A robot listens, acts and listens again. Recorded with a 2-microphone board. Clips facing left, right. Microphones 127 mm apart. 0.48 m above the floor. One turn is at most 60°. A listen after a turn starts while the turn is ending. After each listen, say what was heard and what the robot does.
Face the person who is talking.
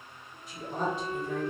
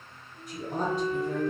The woman speaking: about 40° right or 140° right. Turn 40° right.
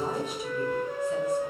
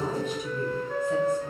Keep listening.
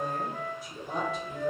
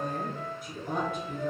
So it is at 95° right. Turn 60° right.
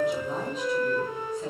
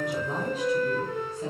Nothing new. It was at 35° right. Turn 35° right.
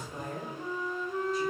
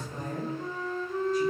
Facing the woman speaking.